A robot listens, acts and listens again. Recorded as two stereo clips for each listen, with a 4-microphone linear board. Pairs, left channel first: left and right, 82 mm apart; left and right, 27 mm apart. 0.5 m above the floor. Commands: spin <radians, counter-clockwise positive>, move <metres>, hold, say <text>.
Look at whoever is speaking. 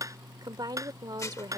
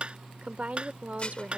spin -0.96
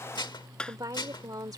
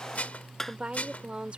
spin -1.05
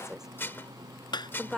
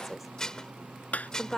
say Facing the woman speaking.